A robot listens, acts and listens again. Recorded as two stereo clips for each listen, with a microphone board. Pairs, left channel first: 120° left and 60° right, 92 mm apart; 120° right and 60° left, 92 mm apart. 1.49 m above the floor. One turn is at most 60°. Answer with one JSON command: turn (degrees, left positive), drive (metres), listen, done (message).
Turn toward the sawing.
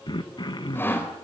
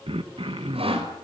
{"turn": 50}
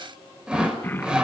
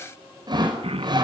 {"turn": 20}
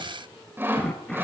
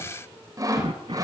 {"turn": 10}
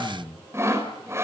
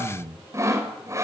{"done": "Facing the sawing, over 4 m away."}